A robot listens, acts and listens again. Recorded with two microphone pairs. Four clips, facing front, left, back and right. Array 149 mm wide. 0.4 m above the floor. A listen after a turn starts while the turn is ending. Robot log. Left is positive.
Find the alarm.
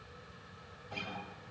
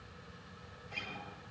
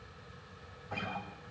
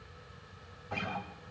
cmd idle
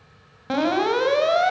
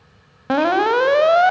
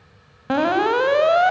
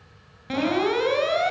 note: The alarm: 110° left.
cmd yaw +110
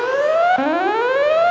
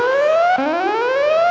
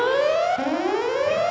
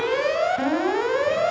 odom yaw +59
note: The alarm is now 50° left.
cmd yaw +50
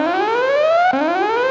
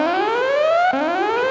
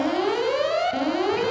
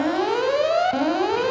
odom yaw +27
note: The alarm is now 20° left.
cmd yaw +20
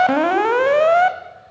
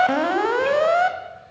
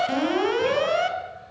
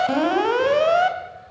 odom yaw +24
end: Facing the alarm.